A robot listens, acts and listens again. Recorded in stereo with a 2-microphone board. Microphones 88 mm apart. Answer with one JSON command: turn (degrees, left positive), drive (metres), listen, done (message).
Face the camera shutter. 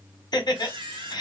{"turn": -90}
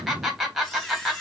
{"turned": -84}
{"done": "Found it: a camera shutter, straight ahead, under 1 m away."}